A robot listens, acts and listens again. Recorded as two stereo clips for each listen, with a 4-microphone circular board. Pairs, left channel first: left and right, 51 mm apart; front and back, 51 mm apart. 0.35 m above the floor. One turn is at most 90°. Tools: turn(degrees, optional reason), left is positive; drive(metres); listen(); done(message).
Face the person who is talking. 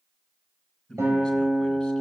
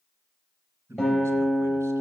turn(degrees=90, reason="The man speaking: 170° left.")
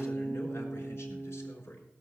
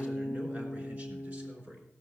turn(degrees=90, reason="The man speaking is now 125° left.")
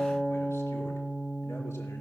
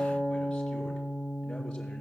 turn(degrees=35, reason="Nothing new. It was at 35° left.")
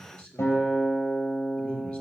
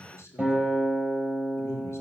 turn(degrees=25, reason="The man speaking is now 25° left.")
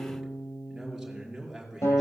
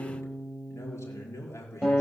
done("Facing the man speaking, over 4 m away.")